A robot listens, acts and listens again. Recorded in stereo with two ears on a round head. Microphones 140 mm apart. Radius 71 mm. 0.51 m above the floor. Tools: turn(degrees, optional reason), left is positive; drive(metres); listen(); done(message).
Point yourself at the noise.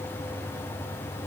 listen()
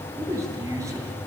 turn(degrees=-20, reason="The man speaking: about 20° right or 160° right.")
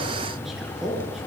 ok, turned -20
turn(degrees=-30)
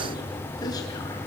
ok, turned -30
listen()
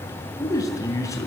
turn(degrees=20, reason="So it is at 20° left.")
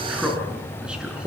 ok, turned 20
done("Found it: a man speaking, straight ahead, over 4 m away.")